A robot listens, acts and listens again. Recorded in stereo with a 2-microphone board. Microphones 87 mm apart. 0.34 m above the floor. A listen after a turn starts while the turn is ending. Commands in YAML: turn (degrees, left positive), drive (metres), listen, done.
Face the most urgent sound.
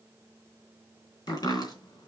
listen: true
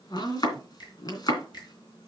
listen: true
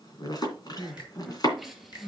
turn: 30
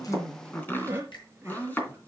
turn: -30
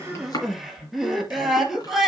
done: "Found it: crying, straight ahead."